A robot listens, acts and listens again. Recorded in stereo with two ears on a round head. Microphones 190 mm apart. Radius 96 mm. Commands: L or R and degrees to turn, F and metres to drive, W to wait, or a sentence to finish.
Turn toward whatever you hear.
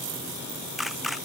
L30
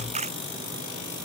R30
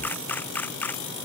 L10
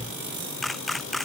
Found it: a camera shutter, straight ahead.